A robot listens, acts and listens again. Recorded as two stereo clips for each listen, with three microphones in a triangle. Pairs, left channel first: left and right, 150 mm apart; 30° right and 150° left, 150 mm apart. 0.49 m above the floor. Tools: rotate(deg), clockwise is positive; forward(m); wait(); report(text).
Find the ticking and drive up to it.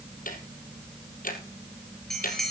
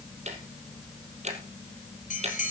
rotate(-110)
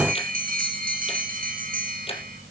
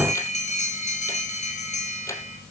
wait()
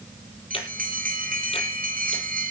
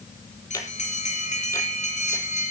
wait()
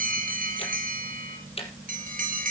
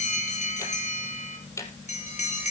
rotate(-40)
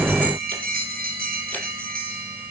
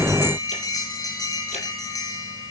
wait()
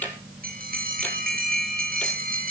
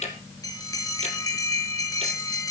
rotate(-10)
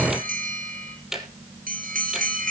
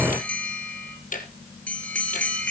forward(1.0)
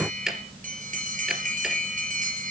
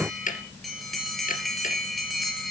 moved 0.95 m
forward(1.0)
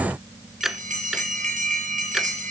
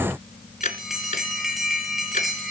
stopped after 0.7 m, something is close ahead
report("Arrived at the ticking, straight ahead.")